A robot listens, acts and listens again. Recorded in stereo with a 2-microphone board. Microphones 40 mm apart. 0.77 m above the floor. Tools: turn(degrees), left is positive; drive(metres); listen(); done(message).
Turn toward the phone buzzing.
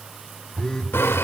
turn(degrees=15)
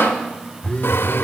turn(degrees=150)
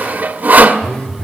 turn(degrees=30)
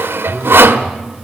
done("Found it: a phone buzzing, straight ahead.")